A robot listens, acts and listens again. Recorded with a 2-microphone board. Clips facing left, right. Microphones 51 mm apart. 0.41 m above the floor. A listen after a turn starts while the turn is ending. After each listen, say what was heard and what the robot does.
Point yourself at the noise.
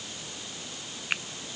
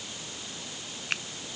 Turn 30° left.
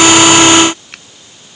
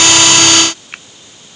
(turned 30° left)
So it is at 25° right. Turn 25° right.
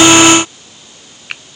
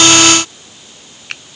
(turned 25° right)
Facing the finger snap.